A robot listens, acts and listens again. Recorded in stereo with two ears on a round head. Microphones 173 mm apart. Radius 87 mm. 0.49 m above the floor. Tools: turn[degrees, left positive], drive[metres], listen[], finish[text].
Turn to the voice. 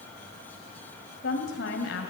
Thought: The woman speaking: about 70° left or 110° left.
Action: turn[70]
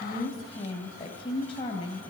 Thought: So it is at 30° left.
Action: turn[30]
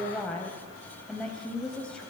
Action: finish[Facing the woman speaking.]